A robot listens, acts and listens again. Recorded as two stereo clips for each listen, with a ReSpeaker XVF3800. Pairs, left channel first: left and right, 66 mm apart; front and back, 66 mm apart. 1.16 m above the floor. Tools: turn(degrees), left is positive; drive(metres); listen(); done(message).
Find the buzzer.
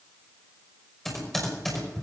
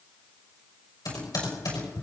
listen()
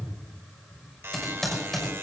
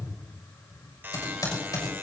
turn(degrees=-130)
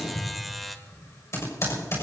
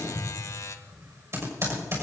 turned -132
done("Facing the buzzer, 1 to 2 m away.")